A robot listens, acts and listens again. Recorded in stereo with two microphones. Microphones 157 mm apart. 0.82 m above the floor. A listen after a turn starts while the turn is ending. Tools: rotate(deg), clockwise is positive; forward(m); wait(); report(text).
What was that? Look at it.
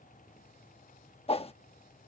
rotate(-40)
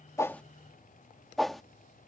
report("Facing the whoosh.")